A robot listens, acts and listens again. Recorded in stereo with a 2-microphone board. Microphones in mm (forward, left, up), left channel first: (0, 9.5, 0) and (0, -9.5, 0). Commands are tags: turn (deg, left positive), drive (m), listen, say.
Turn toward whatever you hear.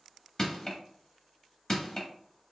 <turn deg="30"/>
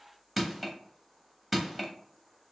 <say>Facing the crushing, under 1 m away.</say>